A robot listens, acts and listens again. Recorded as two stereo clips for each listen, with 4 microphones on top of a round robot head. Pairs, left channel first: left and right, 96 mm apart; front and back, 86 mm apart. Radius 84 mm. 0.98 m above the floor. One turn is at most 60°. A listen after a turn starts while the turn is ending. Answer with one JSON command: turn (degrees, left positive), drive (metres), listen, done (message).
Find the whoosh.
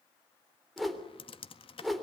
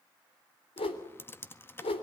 {"done": "Found it: a whoosh, straight ahead."}